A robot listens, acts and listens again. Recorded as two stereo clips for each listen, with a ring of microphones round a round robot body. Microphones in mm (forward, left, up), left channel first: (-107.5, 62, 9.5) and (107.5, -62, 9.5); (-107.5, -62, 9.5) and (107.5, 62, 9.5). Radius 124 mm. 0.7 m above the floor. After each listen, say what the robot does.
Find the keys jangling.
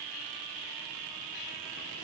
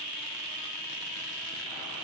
Keep listening.
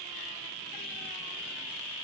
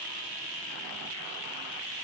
Keep listening.
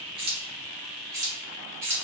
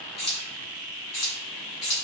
Turn 110° right.
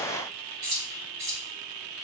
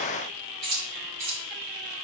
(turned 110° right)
Facing the keys jangling, 2 to 4 m away.